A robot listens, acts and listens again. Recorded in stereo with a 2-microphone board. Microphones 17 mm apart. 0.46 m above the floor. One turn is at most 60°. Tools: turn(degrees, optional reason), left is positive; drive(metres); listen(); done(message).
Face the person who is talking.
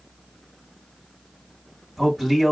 turn(degrees=-20, reason="The man speaking: about 20° right or 160° right.")
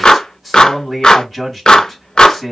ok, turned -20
done("Found it: a man speaking, straight ahead, 2 to 4 m away.")